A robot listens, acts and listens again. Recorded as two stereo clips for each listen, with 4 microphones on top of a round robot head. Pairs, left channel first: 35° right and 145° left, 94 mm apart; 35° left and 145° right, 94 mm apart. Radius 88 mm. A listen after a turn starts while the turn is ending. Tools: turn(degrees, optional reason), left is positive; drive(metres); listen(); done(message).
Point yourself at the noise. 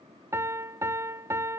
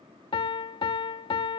turn(degrees=75, reason="The piano: 75° left.")
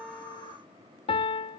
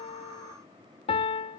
done("Facing the piano.")